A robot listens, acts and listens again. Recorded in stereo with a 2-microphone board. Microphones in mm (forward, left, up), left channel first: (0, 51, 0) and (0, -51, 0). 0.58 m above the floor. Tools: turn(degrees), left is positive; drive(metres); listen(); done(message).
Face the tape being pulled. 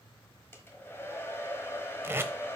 turn(degrees=-25)
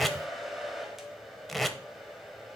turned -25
done("Facing the tape being pulled.")